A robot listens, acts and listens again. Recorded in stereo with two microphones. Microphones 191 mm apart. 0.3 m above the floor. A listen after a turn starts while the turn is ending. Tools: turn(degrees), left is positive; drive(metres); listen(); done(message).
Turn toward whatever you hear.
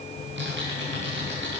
turn(degrees=-90)
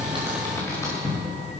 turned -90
turn(degrees=15)
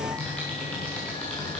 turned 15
done("Found it: typing on a keyboard, straight ahead.")